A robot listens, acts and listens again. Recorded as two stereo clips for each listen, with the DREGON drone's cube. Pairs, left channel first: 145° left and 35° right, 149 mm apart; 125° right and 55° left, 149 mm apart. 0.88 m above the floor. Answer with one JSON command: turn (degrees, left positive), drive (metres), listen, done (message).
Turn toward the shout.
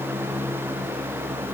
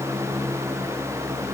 {"listen": true}
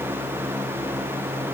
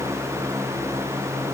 {"listen": true}
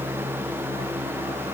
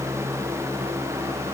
{"done": "I can't make out a shout to turn to."}